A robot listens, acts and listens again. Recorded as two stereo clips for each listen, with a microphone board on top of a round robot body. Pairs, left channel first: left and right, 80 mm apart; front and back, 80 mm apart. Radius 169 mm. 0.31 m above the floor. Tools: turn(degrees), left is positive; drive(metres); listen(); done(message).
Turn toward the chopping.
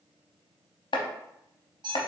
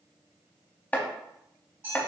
turn(degrees=75)
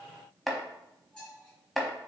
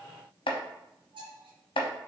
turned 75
done("Facing the chopping, under 1 m away.")